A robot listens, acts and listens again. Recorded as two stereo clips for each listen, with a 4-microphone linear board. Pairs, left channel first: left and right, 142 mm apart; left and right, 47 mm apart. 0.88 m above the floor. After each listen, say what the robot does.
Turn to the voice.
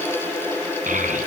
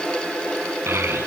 Turn 65° right.
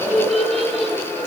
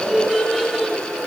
Found it: a child speaking, straight ahead.